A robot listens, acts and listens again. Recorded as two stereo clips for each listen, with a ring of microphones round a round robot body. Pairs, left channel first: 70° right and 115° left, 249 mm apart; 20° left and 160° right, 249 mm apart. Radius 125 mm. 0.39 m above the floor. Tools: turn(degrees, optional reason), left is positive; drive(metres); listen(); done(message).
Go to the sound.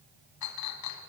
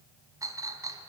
turn(degrees=-80, reason="The clink: 80° right.")
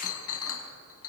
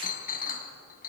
turn(degrees=-35, reason="The clink is now 35° right.")
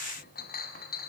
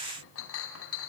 turn(degrees=-15, reason="The clink is now 15° right.")
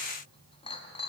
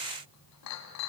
drive(metres=1.0)
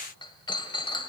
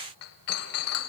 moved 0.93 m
drive(metres=1.0)
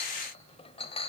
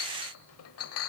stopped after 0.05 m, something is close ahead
done("I am next to the clink.")